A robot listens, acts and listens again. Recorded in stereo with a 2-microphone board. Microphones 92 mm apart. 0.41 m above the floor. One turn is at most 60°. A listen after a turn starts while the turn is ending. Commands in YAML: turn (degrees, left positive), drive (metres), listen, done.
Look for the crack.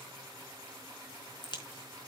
turn: 55
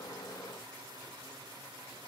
listen: true
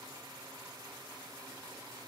done: "I heard a crack, but can't make it out now. It was about straight ahead or 70° left."